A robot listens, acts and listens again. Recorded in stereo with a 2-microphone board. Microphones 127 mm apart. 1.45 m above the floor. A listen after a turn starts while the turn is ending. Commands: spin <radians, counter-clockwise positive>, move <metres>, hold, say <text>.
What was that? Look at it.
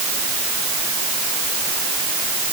hold
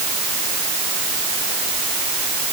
hold
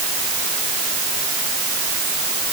say I can't make out anything to turn to.